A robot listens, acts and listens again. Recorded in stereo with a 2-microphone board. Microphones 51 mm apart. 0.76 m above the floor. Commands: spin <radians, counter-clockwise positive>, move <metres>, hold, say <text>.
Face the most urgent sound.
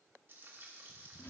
hold
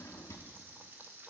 hold
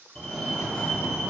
spin 0.52
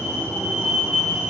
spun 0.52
spin -0.35
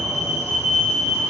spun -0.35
say Found it: a fire alarm, straight ahead, 2 to 4 m away.